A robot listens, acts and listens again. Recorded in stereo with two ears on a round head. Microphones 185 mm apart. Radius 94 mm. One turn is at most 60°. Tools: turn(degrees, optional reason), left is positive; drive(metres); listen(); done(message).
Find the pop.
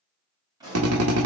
turn(degrees=-20, reason="The pop: about 20° right or 160° right.")
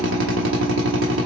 listen()
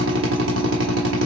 done("I heard a pop, but can't make it out now. It was about straight ahead or 140° right.")